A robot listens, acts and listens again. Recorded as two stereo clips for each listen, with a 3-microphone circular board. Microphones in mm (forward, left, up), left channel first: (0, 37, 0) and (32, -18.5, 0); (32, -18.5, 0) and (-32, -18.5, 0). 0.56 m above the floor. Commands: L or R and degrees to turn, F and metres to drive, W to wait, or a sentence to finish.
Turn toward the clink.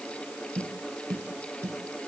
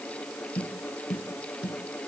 W
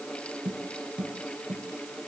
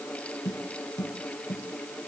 W
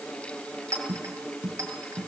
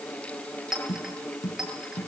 R100
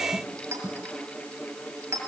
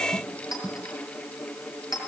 R10
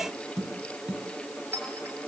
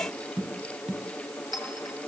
Found it: a clink, straight ahead, over 4 m away.